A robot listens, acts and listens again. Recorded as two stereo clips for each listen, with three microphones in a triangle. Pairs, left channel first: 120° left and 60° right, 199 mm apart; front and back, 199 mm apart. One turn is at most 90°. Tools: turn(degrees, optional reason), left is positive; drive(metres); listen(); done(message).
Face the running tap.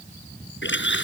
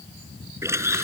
turn(degrees=90, reason="The running tap: 105° left.")
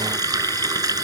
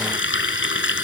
turn(degrees=10, reason="The running tap is now 10° left.")
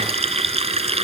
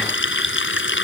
done("Found it: a running tap, straight ahead.")